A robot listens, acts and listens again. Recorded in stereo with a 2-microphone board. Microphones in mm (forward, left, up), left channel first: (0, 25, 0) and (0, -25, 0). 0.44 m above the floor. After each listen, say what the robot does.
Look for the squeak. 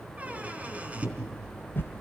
Turn 30° right.
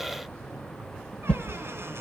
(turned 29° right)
Keep listening.
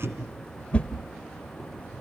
Turn 125° right.
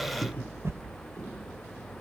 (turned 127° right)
Facing the squeak.